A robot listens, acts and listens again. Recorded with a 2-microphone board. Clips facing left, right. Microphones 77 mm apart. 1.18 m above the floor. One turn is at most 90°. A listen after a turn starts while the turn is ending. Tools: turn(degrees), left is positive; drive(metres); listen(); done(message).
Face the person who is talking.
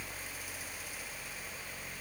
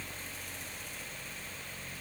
listen()
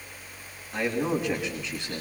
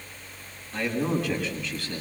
turn(degrees=20)
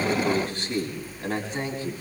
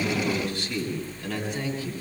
turn(degrees=35)
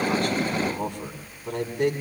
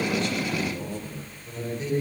turn(degrees=90)
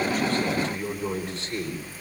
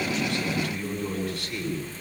turn(degrees=25)
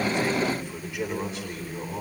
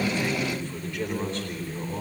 done("Facing the man speaking.")